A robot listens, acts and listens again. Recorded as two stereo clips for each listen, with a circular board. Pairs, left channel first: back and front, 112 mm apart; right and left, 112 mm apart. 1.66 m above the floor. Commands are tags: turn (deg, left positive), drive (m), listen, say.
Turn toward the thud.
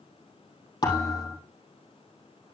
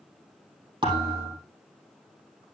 <turn deg="135"/>
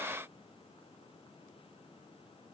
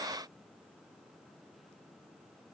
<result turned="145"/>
<turn deg="-10"/>
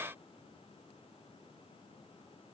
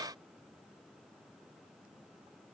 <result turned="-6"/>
<say>Facing where the thud came from. I can't hear it now.</say>